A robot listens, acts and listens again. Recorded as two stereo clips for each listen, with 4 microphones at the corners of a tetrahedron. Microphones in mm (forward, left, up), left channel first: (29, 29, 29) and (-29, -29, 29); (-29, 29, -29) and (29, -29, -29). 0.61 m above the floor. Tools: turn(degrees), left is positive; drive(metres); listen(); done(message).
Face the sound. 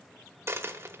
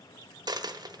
turn(degrees=-75)
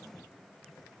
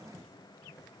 done("Facing where the dropped coin came from. I can't hear it now.")